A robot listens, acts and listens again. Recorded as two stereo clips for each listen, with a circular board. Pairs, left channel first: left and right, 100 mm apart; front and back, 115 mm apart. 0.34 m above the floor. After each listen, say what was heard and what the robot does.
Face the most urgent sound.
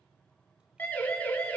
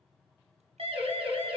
The siren: 160° left. Turn 160° left.
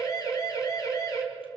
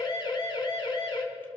The siren is now 45° left. Turn 45° left.
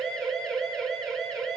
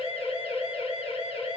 Facing the siren, 2 to 4 m away.